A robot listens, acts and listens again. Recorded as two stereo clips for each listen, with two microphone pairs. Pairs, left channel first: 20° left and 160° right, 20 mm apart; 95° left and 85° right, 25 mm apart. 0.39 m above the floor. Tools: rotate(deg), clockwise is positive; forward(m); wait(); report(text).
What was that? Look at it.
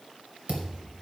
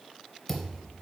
rotate(-180)
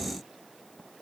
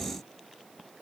report("Facing where the thud came from. I can't hear it now.")